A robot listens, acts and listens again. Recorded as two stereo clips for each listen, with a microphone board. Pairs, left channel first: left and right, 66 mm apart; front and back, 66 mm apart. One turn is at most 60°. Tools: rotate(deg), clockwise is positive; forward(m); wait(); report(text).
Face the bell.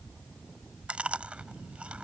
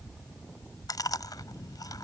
wait()
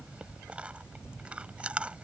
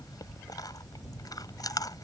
wait()
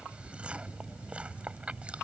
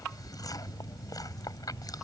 report("I can't make out a bell to turn to.")